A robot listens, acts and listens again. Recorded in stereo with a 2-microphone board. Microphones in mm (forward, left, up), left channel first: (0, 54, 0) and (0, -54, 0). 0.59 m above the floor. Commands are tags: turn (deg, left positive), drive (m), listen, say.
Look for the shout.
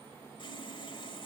<listen/>
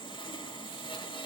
<listen/>
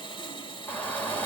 <turn deg="15"/>
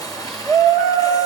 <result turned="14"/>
<say>Facing the shout.</say>